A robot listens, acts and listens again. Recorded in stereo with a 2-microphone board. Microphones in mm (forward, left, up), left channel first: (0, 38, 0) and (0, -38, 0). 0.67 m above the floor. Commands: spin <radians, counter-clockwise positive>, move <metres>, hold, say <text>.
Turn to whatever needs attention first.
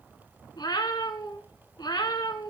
hold
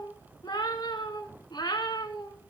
hold
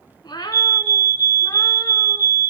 spin -0.79
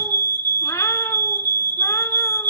spin -1.48
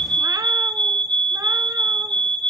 spin 0.35
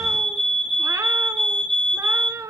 spin 0.17
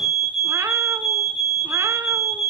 say Found it: a fire alarm, straight ahead.